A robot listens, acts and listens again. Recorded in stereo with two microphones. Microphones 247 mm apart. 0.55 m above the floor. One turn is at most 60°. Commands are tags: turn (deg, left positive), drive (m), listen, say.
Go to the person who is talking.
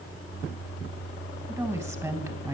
<turn deg="-30"/>
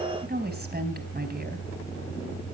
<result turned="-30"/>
<turn deg="-60"/>
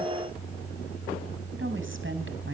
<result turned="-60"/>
<turn deg="-50"/>
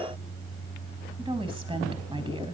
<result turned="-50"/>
<turn deg="-20"/>
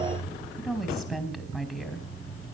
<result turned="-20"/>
<drive m="1.0"/>
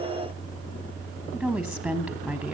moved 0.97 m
<drive m="1.0"/>
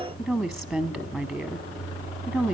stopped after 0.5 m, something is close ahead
<say>I am next to the woman speaking.</say>